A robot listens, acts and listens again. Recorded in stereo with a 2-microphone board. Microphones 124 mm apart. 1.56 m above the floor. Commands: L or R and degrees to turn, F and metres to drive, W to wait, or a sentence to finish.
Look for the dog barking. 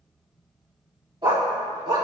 R45
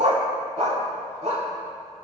R105
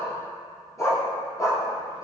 L25
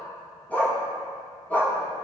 L15
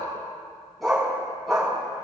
Facing the dog barking.